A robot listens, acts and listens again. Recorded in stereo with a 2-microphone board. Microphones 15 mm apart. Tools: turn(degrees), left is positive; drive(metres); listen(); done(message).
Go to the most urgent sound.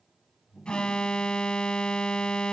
turn(degrees=65)
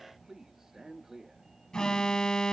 turn(degrees=45)
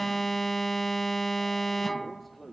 turn(degrees=10)
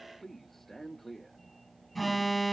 drive(metres=1.0)
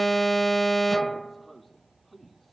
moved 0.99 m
turn(degrees=10)
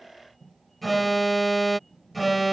drive(metres=1.0)
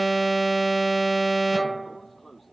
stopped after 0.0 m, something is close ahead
done("Arrived at the alarm, straight ahead.")